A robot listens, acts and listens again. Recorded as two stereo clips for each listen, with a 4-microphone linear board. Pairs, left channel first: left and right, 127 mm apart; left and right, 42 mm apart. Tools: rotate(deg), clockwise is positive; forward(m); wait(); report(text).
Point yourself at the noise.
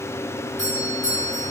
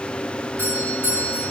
rotate(65)
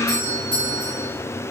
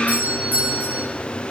rotate(40)
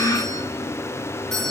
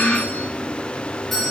report("Facing the doorbell.")